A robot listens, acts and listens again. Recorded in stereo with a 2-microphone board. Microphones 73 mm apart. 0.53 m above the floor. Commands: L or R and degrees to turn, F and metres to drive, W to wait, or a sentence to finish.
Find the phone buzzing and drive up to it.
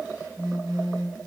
R90
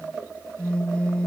L15
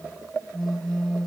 F1.0
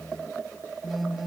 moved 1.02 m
F1.0
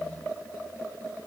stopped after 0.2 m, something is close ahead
W
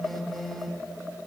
I am next to the phone buzzing.